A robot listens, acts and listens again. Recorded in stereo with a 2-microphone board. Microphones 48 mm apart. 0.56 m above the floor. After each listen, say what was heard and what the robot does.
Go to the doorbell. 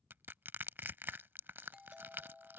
Turn 30° right.
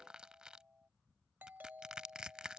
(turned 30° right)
So it is at 135° right. Turn 135° right.
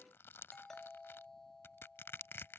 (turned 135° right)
The doorbell is now 10° left. Turn 10° left.
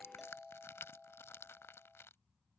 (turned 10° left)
Drive 1.0 m forward.
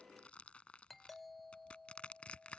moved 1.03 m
Drive 1.0 m forward.
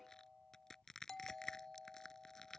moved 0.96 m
The doorbell is now 10° left. Turn 10° left.
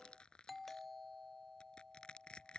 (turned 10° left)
Drive 1.0 m forward.
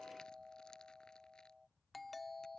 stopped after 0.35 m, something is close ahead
I am next to the doorbell.